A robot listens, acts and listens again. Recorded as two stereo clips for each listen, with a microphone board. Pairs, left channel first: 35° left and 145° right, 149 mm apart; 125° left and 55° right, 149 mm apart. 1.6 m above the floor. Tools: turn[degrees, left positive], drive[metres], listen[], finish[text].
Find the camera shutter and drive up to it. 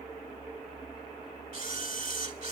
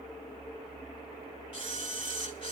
Thought: The camera shutter: 175° left.
Action: turn[175]
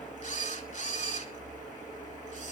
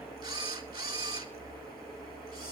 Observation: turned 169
Action: drive[1.0]
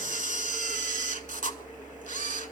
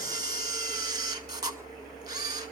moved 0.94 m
Action: drive[1.0]
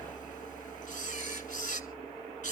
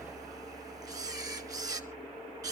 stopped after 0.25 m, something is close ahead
Action: finish[Arrived at the camera shutter, straight ahead.]